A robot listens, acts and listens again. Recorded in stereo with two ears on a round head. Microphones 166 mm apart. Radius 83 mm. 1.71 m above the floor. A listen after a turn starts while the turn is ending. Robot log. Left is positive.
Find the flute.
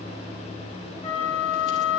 note: The flute: about 35° left or 145° left.
cmd yaw +35
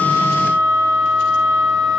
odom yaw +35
end: Found it: a flute, straight ahead.